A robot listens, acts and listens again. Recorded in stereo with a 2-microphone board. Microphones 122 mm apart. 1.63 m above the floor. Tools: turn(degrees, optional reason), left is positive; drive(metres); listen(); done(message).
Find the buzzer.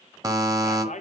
turn(degrees=-30, reason="The buzzer: about 30° right or 150° right.")
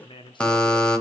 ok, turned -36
turn(degrees=10, reason="So it is at 10° left.")
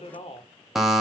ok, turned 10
done("Found it: a buzzer, straight ahead, under 1 m away.")